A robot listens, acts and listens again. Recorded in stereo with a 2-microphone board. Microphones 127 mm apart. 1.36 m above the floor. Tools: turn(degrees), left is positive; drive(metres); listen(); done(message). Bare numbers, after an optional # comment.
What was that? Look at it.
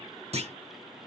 # The clunk: about 55° right or 125° right.
turn(-55)
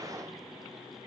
listen()
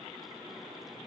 done("I heard a clunk, but can't make it out now. It was about straight ahead or 70° right.")